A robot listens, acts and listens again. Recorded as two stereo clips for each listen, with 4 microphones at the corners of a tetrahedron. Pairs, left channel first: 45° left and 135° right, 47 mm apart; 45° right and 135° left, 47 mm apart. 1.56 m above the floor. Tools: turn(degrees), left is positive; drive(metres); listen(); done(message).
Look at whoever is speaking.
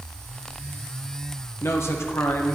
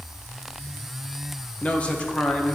turn(degrees=20)
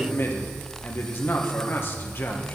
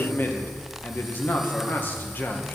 done("Found it: a man speaking, straight ahead, 1 to 2 m away.")